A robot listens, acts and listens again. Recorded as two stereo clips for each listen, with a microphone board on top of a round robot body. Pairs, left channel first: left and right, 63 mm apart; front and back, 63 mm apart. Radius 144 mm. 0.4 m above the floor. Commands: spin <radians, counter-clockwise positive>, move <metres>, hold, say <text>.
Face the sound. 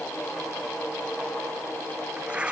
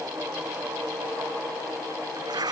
spin -2.88
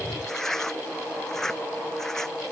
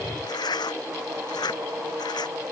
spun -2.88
say Found it: tearing paper, straight ahead.